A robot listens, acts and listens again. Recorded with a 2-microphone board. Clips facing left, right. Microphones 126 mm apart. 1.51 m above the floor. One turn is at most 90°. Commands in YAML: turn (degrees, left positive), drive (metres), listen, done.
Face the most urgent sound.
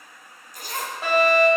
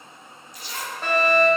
turn: 30
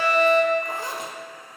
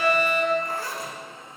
turn: -20
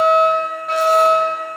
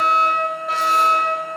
done: "Facing the fire alarm."